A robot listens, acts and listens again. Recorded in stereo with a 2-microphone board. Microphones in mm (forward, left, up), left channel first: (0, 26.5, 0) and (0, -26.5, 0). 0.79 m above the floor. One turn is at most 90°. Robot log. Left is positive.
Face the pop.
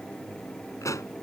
cmd yaw +90
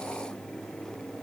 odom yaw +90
end: Facing where the pop came from. I can't hear it now.